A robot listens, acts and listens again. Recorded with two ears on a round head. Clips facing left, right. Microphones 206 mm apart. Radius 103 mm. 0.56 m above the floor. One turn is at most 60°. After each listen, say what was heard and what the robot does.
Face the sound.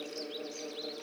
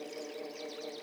Keep listening.
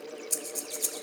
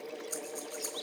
The breathing: about 40° left or 140° left. Turn 40° left.
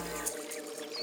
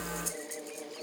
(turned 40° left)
Found it: breathing, straight ahead.